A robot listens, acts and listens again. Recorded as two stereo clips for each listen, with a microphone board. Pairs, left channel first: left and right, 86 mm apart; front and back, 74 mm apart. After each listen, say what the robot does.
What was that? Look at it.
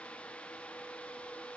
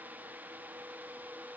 Keep listening.
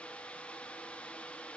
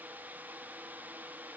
Keep listening.
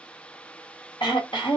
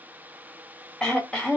Turn 80° left.
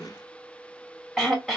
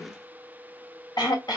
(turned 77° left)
Found it: throat clearing, straight ahead, 1 to 2 m away.